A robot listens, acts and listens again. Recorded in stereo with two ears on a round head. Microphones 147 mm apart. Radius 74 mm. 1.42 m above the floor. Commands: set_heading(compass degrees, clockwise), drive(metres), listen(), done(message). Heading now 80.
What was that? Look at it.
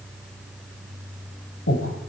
set_heading(350)
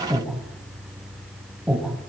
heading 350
done("Facing the breathing.")